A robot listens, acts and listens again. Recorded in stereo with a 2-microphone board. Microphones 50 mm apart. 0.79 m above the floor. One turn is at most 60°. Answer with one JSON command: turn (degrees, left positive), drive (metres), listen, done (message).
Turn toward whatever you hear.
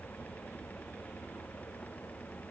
{"listen": true}
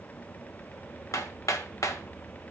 {"turn": 60}
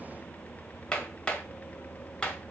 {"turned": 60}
{"turn": 20}
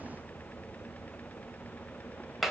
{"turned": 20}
{"done": "Facing the hammering."}